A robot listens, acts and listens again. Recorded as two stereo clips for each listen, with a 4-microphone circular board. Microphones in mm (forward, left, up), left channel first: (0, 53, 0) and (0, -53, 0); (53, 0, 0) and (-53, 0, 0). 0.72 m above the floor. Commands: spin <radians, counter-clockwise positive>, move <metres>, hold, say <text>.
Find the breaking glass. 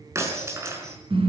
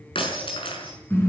spin -0.52
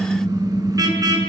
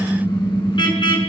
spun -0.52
say I heard breaking glass from this way, but can't make it out now.